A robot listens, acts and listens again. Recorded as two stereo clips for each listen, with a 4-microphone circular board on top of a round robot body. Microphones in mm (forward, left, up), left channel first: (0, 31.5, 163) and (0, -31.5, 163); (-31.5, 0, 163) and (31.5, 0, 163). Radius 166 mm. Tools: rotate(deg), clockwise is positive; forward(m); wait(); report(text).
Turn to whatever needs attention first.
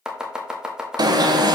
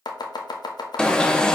rotate(100)
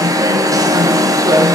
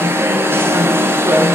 rotate(55)
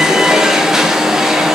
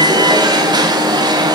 report("Facing the alarm.")